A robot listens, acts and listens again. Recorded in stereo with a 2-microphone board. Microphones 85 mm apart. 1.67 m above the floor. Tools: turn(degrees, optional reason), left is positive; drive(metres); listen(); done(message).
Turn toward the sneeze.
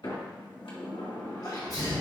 turn(degrees=45, reason="The sneeze: about 45° left or 135° left.")
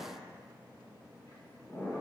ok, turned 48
listen()
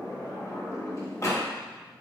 done("I heard a sneeze, but can't make it out now. It was about 5° right or 90° left.")